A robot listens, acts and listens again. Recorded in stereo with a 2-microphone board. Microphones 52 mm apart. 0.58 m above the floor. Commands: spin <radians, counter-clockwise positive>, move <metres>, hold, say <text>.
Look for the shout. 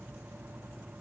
hold
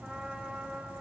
hold
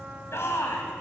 spin 1.05
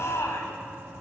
spin 1.05
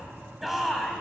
say Facing the shout, over 4 m away.